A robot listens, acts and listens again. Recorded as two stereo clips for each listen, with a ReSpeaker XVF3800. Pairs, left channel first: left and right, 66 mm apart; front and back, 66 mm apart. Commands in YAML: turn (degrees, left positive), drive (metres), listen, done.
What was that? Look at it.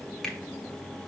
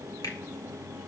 turn: 10
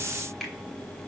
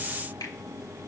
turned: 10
done: "Facing the finger snap, 1 to 2 m away."